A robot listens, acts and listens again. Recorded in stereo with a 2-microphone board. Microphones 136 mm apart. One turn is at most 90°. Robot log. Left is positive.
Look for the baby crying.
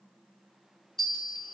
cmd idle
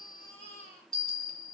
note: The baby crying: about 45° left or 135° left.
cmd yaw +45
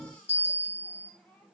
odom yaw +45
note: So it is at 10° left.
cmd yaw +10
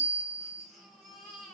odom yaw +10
end: Found it: a baby crying, straight ahead, 1 to 2 m away.